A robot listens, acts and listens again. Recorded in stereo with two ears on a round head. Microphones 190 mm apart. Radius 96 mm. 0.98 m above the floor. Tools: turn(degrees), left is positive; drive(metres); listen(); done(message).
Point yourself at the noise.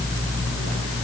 listen()
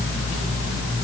listen()
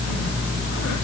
done("I can't make out anything.")